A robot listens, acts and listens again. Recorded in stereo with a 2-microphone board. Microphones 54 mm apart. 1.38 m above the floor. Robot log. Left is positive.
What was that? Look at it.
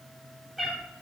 cmd yaw +30
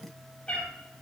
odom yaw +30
note: So it is at 155° left.
cmd yaw +155
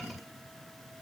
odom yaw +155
cmd idle
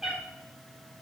note: The cat meowing is now 10° right.
cmd yaw -10
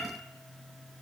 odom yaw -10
end: Facing the cat meowing.